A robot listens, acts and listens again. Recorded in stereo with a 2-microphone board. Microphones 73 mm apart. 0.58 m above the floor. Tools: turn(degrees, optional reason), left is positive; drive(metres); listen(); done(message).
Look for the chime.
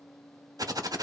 listen()
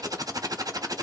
listen()
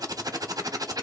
done("I can't make out a chime, only typing on a keyboard.")